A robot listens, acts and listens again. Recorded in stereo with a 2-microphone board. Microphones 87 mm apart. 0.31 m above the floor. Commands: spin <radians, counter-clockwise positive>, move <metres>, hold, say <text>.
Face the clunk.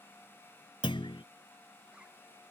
spin 1.57
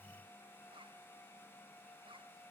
say Facing where the clunk came from. I can't hear it now.